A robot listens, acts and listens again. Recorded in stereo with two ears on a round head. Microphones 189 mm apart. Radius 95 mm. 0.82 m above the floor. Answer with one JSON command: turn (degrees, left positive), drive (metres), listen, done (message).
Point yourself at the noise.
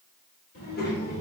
{"turn": 55}
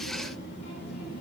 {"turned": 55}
{"turn": 45}
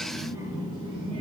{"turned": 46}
{"turn": -30}
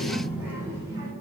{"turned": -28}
{"turn": -15}
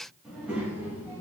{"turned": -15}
{"turn": -10}
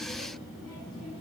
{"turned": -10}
{"done": "Facing the child speaking."}